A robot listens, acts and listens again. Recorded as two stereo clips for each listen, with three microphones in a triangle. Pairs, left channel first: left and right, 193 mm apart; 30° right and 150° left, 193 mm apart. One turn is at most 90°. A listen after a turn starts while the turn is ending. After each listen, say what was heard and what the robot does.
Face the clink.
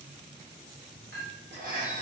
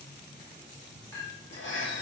The clink: 105° right. Turn 90° right.
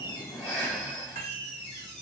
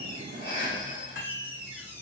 The clink is now 50° right. Turn 50° right.
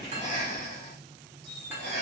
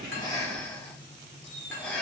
Keep listening.
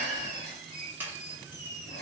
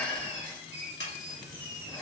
The clink is now 10° right. Turn 10° right.
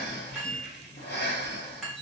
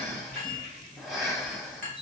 Facing the clink.